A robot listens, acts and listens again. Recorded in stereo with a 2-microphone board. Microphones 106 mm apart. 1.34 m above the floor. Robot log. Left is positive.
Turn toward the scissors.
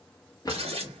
note: The scissors: about 65° right or 115° right.
cmd yaw -65
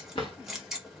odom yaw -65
end: Found it: scissors, straight ahead.